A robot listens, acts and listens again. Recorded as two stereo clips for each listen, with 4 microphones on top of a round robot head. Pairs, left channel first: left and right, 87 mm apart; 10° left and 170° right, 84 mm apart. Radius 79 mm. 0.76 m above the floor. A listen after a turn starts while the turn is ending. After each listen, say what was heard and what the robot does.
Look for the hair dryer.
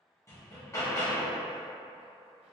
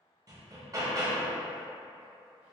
Keep listening.
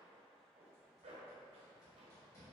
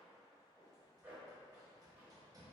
Keep listening.
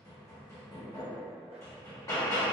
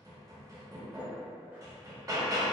I can't make out a hair dryer, only a zipper and hammering.